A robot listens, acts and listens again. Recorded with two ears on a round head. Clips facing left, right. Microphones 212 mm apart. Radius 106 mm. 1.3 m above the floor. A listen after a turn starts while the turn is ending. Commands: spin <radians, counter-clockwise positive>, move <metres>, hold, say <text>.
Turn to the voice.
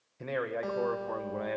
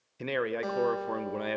spin -0.79
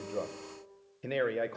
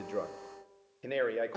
say Found it: a man speaking, straight ahead.